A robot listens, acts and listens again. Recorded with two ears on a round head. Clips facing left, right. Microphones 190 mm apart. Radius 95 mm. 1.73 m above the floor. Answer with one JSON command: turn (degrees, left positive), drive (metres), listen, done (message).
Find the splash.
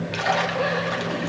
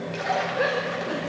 {"turn": 75}
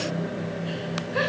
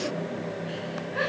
{"listen": true}
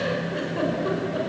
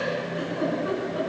{"done": "I heard a splash, but can't make it out now. It was about straight ahead or 30° left."}